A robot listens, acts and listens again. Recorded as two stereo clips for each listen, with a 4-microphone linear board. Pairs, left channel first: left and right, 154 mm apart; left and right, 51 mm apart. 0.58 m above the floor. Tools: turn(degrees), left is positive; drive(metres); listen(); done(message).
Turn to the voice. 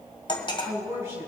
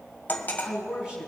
turn(degrees=-20)
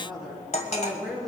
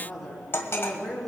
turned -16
done("Facing the woman speaking, over 4 m away.")